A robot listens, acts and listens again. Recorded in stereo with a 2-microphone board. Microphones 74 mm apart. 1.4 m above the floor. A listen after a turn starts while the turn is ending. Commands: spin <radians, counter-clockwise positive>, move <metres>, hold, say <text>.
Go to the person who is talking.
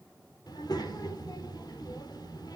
spin 1.13
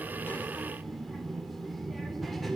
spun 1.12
move 1.0
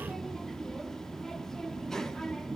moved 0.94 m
move 1.0
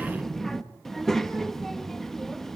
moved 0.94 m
move 1.0
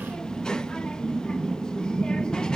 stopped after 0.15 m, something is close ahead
spin 0.17
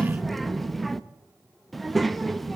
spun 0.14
say Arrived at the child speaking, straight ahead.